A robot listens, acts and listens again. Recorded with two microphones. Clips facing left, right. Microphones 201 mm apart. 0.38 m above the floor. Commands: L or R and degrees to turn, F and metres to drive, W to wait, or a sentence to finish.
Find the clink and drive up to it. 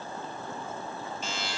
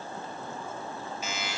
W
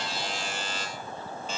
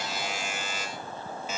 W
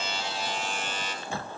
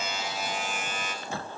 I can't make out a clink, only a buzzer.